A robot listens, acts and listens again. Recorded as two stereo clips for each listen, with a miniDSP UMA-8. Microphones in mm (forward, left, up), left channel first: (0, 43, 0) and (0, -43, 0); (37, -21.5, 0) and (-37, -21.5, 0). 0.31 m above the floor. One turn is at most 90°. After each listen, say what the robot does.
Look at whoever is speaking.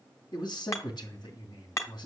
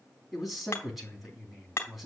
Turn 90° left.
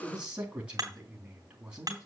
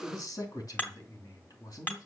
Turn 15° right.
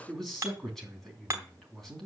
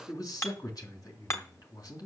Found it: a man speaking, straight ahead.